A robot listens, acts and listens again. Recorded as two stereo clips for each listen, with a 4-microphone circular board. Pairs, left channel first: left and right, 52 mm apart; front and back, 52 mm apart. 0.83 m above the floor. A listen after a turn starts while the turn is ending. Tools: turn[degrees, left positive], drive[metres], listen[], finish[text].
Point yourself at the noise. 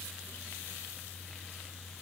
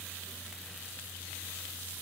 Action: listen[]
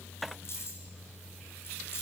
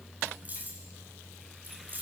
Thought: The keys jangling: 130° left.
Action: turn[130]
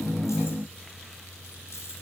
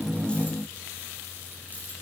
Action: listen[]
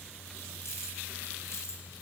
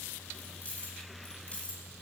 Thought: The keys jangling is now 70° left.
Action: turn[70]
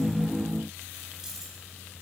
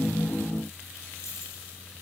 Action: listen[]
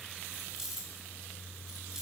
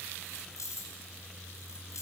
Thought: The keys jangling is now 10° right.
Action: turn[-10]
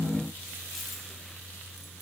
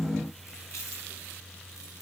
Action: listen[]
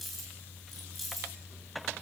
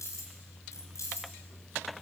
Action: finish[Found it: keys jangling, straight ahead, over 4 m away.]